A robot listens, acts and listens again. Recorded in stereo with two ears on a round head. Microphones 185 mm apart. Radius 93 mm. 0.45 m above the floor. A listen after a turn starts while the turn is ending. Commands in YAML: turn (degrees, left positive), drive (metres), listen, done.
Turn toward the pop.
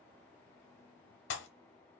turn: 70
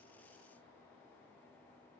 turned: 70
listen: true
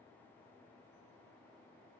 done: "I heard a pop, but can't make it out now. It was about straight ahead or 40° left."